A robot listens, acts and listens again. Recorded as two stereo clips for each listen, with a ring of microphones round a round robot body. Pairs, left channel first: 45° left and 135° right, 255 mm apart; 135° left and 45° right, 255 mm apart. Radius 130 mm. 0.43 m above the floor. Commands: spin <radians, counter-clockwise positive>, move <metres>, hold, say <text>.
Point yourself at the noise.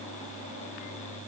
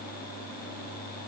hold
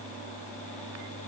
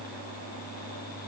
hold
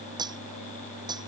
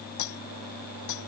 spin 2.62
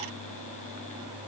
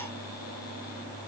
hold
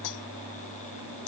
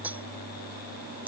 spin 0.70
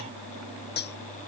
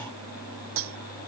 say Found it: cutlery clinking, straight ahead.